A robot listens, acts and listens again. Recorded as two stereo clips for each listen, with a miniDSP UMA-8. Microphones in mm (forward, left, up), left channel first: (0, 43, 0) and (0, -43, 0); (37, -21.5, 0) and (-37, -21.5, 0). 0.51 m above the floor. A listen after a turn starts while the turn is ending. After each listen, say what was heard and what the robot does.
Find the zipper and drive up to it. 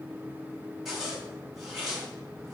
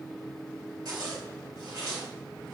The zipper: 175° right. Turn 175° right.
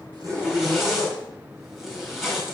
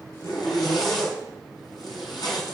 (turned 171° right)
Drive 1.0 m forward.
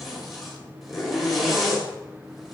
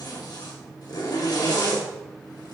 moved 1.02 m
Drive 1.0 m forward.
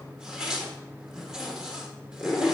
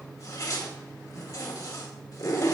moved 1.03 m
The zipper is now 10° right. Turn 10° right.
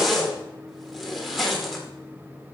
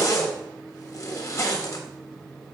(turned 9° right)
Drive 1.0 m forward.
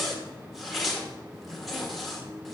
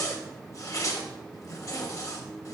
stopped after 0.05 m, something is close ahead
Arrived at the zipper, straight ahead.